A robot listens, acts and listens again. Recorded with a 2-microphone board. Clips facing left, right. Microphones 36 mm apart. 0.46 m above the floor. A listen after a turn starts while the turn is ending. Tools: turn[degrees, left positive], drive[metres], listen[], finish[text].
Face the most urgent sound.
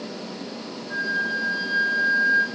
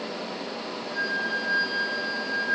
Action: listen[]
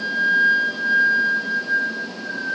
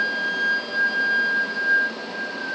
Action: listen[]
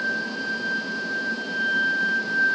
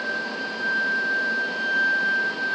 Action: finish[I can't make out anything urgent to turn to.]